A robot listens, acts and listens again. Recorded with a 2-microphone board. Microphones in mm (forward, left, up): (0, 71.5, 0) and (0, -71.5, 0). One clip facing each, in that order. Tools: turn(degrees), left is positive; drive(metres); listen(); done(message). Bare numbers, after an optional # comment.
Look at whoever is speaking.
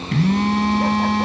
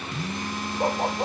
listen()
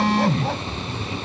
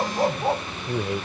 turn(-90)
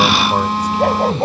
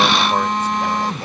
listen()
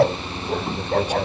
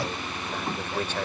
# The man speaking is now 15° left.
turn(15)
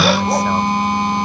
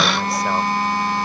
listen()
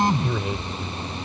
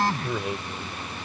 done("Found it: a man speaking, straight ahead.")